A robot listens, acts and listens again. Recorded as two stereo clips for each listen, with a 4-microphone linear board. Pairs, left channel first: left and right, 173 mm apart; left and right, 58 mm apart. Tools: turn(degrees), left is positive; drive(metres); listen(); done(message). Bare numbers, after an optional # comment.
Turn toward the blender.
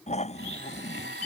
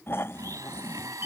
turn(-90)
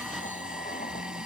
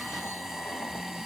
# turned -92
listen()
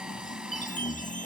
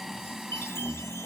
listen()
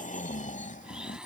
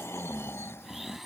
done("Facing the blender.")